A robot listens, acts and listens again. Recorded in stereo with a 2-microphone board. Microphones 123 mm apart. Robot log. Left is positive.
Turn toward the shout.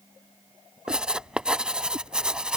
cmd idle
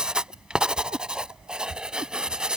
cmd idle
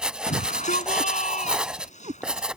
note: The shout: about 75° left or 105° left.
cmd yaw +75
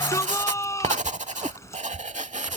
note: So it is at 25° left.
cmd yaw +25
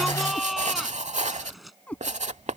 end: Facing the shout.